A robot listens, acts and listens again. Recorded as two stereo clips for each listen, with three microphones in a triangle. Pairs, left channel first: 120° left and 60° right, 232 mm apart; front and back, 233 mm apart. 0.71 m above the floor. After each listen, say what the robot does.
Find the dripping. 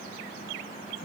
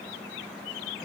Keep listening.
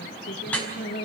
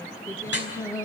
Turn 35° left.
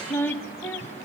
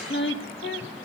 Keep listening.
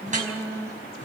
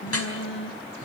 Facing the dripping, over 4 m away.